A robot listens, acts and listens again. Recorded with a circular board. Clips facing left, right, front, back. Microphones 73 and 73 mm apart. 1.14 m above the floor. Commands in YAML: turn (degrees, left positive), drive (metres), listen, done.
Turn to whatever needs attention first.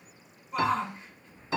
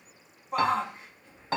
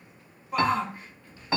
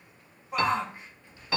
turn: -110
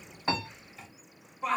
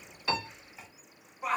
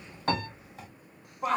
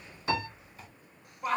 turn: -15
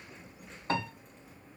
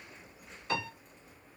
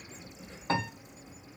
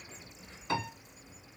listen: true
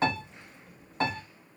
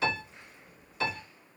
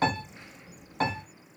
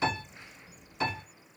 listen: true
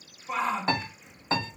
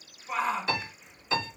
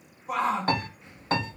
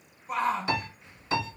done: "Facing the shout."